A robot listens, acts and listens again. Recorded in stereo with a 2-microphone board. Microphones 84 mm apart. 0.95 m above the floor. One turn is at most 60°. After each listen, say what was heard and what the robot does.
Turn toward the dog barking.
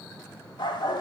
The dog barking: about 70° left or 110° left. Turn 60° left.
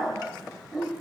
So it is at 10° right. Turn 10° right.
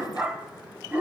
The dog barking is now 20° right. Turn 20° right.
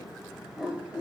The dog barking is now 15° right. Turn 15° right.
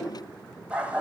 The dog barking is now 15° right. Turn 15° right.
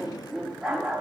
Facing the dog barking.